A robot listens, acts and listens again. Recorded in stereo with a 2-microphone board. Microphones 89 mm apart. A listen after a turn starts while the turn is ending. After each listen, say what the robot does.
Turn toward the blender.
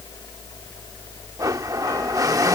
Turn 40° right.
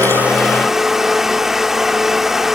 Found it: a blender, straight ahead.